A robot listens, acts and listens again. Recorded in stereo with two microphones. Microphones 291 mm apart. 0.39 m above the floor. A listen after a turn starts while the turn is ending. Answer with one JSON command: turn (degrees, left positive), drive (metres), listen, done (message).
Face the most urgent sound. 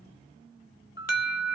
{"turn": 60}
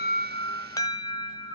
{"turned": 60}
{"turn": 15}
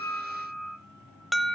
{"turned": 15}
{"done": "Found it: an alarm, straight ahead."}